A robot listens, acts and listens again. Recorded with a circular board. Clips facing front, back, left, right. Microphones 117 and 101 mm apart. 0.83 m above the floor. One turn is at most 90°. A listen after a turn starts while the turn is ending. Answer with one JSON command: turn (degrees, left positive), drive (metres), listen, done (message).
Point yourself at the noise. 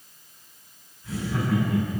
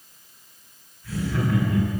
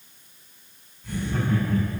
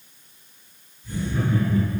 {"turn": 70}
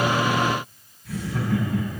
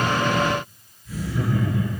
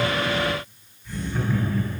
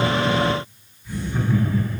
{"done": "Found it: laughter, straight ahead."}